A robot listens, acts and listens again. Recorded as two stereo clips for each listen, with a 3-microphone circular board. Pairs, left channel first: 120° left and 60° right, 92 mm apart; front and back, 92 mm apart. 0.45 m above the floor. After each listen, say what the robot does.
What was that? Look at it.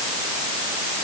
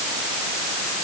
Keep listening.
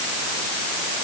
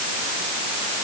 Keep listening.
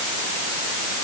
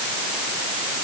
I can't make out anything.